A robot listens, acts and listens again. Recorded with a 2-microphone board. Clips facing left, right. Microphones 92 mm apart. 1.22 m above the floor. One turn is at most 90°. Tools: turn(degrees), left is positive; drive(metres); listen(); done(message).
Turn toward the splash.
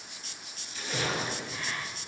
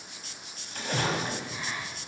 turn(degrees=-55)
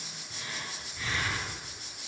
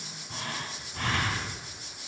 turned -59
listen()
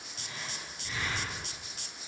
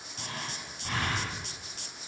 done("I heard a splash, but can't make it out now. It was about 5° left or 65° right.")